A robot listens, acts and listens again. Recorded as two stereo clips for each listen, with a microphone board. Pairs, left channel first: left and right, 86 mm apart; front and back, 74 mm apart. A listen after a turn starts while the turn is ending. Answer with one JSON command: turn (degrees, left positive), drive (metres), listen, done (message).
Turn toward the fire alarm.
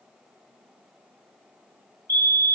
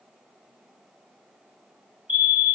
{"turn": -115}
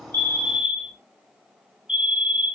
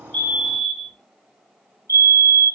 {"turn": -10}
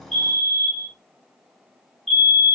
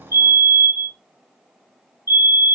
{"done": "Found it: a fire alarm, straight ahead."}